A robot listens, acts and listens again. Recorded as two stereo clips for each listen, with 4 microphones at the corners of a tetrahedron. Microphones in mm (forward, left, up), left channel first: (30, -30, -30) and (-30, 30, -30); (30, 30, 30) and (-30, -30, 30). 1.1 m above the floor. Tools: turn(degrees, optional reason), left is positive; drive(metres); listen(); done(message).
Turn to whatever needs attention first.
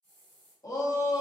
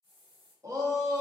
turn(degrees=-85, reason="The shout: 85° right.")
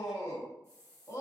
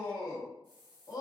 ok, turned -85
done("Found it: a shout, straight ahead, under 1 m away.")